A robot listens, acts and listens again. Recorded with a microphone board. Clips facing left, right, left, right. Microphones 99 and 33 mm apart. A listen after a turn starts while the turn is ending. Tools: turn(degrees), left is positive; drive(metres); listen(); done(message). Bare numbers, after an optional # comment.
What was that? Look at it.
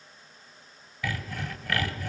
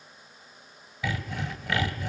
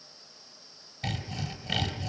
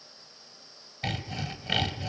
# The sawing: about 20° right or 160° right.
turn(-20)
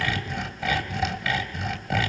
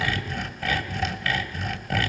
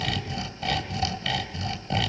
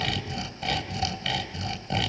done("Facing the sawing, 1 to 2 m away.")